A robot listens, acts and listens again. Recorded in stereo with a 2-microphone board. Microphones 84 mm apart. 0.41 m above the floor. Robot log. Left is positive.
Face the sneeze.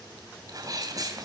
note: The sneeze: about 45° right or 135° right.
cmd yaw -45
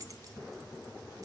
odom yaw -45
cmd idle
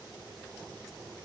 end: I heard a sneeze, but can't make it out now. It was about straight ahead or 90° right.